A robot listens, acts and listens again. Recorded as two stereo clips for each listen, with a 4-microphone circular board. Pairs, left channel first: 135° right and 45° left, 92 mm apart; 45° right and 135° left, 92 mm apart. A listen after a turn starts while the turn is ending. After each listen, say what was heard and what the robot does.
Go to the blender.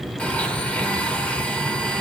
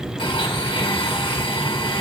The blender: 60° right. Turn 60° right.
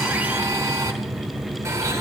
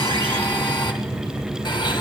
The blender is now 10° right. Turn 10° right.
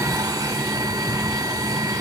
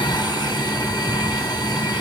Drive 1.0 m forward.
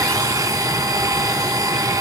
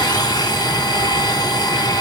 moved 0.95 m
Drive 1.0 m forward.
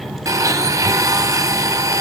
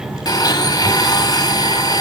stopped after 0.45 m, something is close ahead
I am next to the blender.